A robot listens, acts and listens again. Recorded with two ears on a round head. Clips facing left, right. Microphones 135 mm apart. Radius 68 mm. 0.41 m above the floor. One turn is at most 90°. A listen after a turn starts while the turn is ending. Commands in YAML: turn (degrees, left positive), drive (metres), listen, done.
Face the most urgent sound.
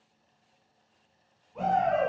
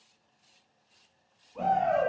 turn: 30
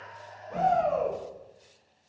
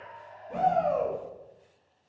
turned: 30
turn: -25
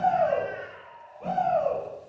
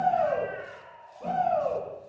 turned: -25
done: "Found it: a shout, straight ahead."